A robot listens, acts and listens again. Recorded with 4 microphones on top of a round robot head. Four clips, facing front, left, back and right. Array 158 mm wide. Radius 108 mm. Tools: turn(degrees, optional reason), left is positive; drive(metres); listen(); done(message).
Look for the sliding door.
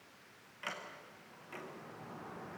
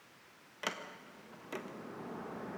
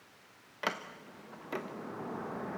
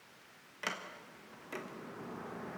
turn(degrees=170, reason="The sliding door: 170° left.")
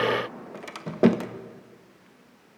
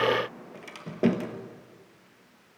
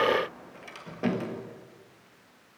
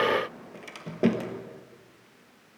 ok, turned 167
done("Found it: a sliding door, straight ahead, 1 to 2 m away.")